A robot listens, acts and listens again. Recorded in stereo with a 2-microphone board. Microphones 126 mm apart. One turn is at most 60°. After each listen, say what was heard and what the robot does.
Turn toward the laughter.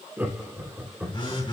Turn 30° right.
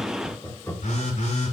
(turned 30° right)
So it is at 25° left. Turn 25° left.
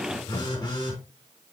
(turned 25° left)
Keep listening.
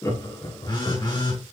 The laughter is now 30° left. Turn 30° left.
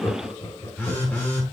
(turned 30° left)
The laughter is now 25° left. Turn 25° left.
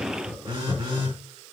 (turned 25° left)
The laughter is now 20° right. Turn 20° right.
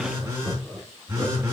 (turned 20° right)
Found it: laughter, straight ahead.